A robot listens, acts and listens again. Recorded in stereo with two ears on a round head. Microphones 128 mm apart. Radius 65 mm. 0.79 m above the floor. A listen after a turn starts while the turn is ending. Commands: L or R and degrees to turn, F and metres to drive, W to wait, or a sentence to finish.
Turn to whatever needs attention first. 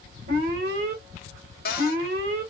R65
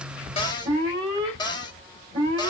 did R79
R30
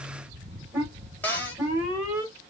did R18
R15
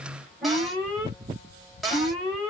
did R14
Found it: an alarm, straight ahead, 1 to 2 m away.